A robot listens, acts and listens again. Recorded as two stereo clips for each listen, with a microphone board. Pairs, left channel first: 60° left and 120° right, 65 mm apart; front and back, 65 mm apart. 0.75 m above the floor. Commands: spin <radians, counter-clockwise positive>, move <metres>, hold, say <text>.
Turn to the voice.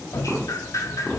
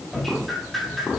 hold
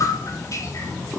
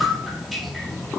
hold
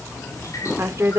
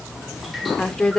spin -1.31
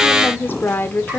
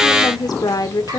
say Found it: a woman speaking, straight ahead.